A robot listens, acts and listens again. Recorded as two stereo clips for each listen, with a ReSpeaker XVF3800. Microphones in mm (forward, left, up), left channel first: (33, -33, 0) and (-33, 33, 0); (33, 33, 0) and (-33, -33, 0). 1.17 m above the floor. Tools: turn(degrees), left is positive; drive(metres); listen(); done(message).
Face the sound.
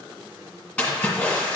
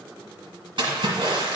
turn(degrees=-110)
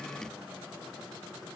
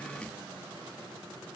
done("Facing where the splash came from. I can't hear it now.")